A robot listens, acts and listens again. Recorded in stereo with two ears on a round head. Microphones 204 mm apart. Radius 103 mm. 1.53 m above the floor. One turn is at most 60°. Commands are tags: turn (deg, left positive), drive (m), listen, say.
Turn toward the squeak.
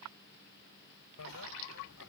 <listen/>
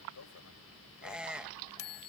<turn deg="-30"/>
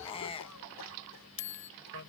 <turn deg="25"/>
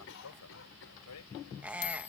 <say>Facing the squeak.</say>